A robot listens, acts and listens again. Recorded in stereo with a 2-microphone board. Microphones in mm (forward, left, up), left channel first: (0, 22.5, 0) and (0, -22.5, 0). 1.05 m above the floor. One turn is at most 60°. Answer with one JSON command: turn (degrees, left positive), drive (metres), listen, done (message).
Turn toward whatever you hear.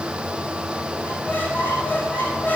{"turn": 50}
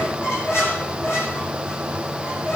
{"turn": 60}
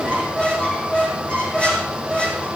{"turn": 30}
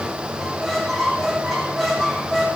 {"done": "Facing the squeak."}